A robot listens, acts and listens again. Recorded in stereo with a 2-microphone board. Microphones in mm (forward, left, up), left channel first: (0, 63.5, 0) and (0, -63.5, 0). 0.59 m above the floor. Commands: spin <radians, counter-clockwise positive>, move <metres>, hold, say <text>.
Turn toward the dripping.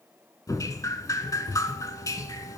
spin 0.52
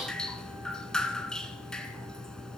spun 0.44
say Facing the dripping.